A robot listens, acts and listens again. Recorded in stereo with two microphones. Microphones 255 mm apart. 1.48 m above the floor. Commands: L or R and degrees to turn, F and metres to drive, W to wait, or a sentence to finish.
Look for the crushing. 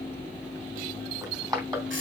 R15
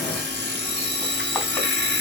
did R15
W
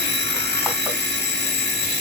W
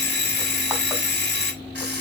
I heard crushing, but can't make it out now. It was about straight ahead or 150° right.